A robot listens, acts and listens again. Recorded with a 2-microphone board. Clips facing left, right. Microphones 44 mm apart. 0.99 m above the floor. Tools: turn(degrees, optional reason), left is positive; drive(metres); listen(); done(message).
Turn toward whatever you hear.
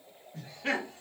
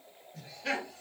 turn(degrees=35, reason="The laughter: about 35° left or 145° left.")
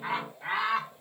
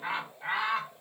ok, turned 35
done("Found it: laughter, straight ahead.")